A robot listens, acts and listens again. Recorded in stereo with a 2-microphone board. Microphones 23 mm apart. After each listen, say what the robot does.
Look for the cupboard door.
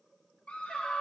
Keep listening.
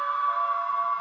Keep listening.
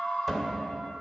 Turn 20° left.
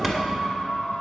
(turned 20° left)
Facing the cupboard door.